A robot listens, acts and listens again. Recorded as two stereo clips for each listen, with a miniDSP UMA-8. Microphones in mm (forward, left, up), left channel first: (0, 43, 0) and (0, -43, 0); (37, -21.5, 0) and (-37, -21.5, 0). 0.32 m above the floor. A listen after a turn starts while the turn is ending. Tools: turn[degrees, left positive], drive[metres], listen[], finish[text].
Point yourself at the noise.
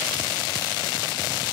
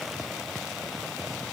Action: listen[]
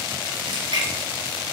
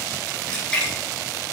Thought: The splash: 80° right.
Action: turn[-80]
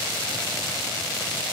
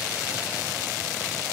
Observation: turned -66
Thought: Nothing new. It was at 10° right.
Action: turn[-10]
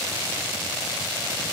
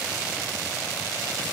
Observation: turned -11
Action: finish[Facing where the splash came from. I can't hear it now.]